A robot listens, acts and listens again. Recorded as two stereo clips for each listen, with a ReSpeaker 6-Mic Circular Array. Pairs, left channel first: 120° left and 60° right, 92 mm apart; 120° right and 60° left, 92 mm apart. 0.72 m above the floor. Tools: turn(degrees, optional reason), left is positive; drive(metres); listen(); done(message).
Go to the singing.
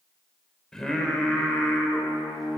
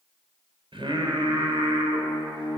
turn(degrees=35, reason="The singing: 35° left.")
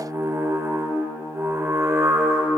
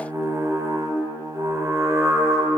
drive(metres=1.0)
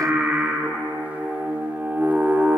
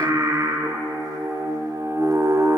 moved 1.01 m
turn(degrees=15, reason="The singing is now 15° left.")
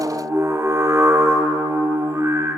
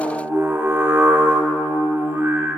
drive(metres=1.0)
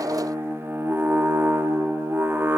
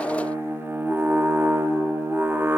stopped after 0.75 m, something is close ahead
done("I am next to the singing.")